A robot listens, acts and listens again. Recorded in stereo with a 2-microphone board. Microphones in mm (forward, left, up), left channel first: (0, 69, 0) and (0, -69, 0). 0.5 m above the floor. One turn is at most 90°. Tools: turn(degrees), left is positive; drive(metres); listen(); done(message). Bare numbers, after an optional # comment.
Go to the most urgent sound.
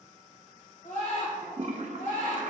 # The scream: about 65° left or 115° left.
turn(65)
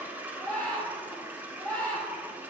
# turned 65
# So it is at 10° left.
turn(10)
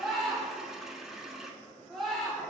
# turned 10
drive(1.0)
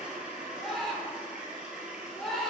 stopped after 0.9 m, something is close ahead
done("Arrived at the scream, straight ahead.")